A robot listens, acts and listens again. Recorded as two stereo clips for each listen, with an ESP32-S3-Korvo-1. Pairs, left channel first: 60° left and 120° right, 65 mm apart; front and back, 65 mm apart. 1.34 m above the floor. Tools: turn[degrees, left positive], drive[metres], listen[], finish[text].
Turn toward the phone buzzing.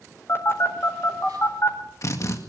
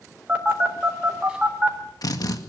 Thought: The phone buzzing: 110° left.
Action: turn[110]
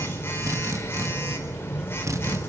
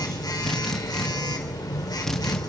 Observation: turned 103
Action: finish[Facing the phone buzzing.]